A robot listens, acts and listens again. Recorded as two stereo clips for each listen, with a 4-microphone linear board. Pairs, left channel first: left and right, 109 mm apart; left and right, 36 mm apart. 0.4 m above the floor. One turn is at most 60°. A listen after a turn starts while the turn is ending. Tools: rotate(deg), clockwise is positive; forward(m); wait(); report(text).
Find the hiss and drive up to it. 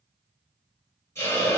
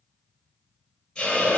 rotate(-25)
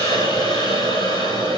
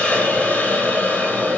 rotate(-60)
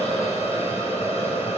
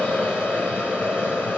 rotate(-60)
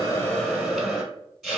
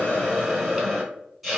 forward(1.0)
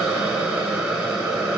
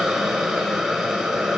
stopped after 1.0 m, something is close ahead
rotate(10)
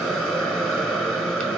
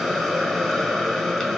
report("Arrived at the hiss, straight ahead.")